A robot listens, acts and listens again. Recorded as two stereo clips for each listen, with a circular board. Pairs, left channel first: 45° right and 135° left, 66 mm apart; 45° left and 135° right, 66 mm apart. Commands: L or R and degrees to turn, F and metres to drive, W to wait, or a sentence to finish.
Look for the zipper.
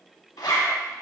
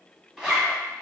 R55
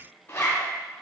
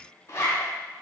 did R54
Found it: a zipper, straight ahead, under 1 m away.